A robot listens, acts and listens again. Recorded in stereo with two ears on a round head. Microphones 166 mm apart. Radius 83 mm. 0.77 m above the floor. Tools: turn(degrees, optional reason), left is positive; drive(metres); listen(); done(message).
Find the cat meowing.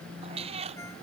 turn(degrees=-35, reason="The cat meowing: about 35° right or 145° right.")
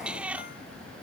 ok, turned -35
done("Facing the cat meowing.")